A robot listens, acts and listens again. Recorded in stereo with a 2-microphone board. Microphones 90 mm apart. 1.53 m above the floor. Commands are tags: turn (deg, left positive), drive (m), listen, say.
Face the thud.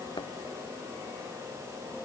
<turn deg="60"/>
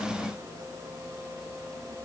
<listen/>
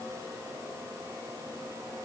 <say>I heard a thud, but can't make it out now. It was about straight ahead or 60° left.</say>